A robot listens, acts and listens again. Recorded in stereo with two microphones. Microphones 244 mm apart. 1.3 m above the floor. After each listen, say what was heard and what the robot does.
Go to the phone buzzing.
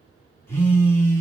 Turn 30° left.
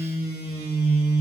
So it is at 140° left. Turn 140° left.
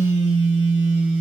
The phone buzzing is now 50° left. Turn 50° left.
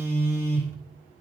The phone buzzing is now 10° right. Turn 10° right.
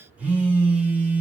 Drive 1.0 m forward.
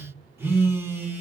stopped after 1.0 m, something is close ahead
The phone buzzing is now 10° right. Turn 10° right.
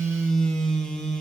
Arrived at the phone buzzing, straight ahead.